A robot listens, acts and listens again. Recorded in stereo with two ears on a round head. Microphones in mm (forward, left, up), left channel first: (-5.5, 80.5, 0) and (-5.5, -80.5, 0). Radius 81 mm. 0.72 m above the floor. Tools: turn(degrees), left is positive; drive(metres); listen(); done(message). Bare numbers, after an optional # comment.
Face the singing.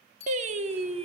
# The singing: about 35° right or 145° right.
turn(-35)
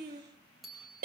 # So it is at 130° right.
turn(-130)
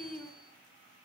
done("Found it: singing, straight ahead.")